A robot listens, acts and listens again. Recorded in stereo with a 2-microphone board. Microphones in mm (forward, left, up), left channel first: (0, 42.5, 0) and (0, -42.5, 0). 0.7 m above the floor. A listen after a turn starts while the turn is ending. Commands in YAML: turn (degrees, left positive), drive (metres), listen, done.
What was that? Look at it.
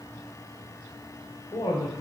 turn: 60
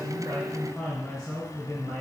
done: "Found it: a woman speaking, straight ahead, 2 to 4 m away."